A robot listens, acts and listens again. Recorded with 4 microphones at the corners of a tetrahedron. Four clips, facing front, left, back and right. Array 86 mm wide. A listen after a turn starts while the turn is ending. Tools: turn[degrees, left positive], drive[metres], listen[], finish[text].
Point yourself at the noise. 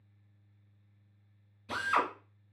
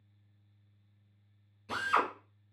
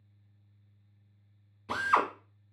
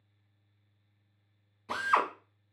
Thought: The drill: 145° right.
Action: turn[-145]
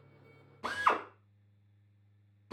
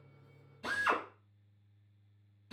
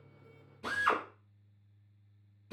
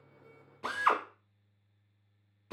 Thought: The drill is now 55° right.
Action: turn[-55]
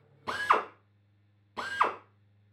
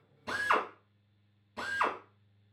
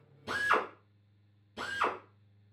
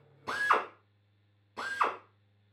Thought: The drill is now 15° right.
Action: turn[-15]
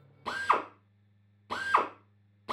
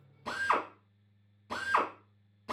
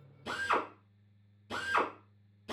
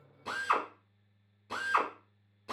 Action: finish[Facing the drill.]